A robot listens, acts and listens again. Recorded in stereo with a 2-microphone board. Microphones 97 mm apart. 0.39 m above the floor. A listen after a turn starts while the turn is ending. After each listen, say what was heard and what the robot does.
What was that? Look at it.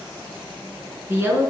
The woman speaking: about 25° right or 155° right. Turn 25° right.
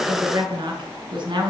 So it is at 125° right. Turn 125° right.
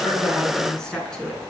The woman speaking is now 10° left. Turn 10° left.
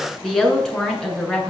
The woman speaking is now 10° left. Turn 10° left.
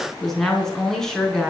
Found it: a woman speaking, straight ahead, over 4 m away.